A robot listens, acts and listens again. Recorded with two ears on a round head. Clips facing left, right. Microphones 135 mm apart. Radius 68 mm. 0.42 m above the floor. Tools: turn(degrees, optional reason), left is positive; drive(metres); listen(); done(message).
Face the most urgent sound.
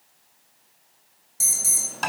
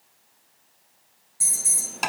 turn(degrees=45, reason="The alarm: about 45° left or 135° left.")
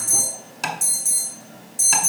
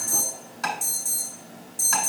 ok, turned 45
turn(degrees=15, reason="So it is at 15° left.")
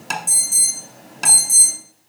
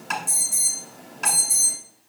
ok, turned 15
done("Found it: an alarm, straight ahead.")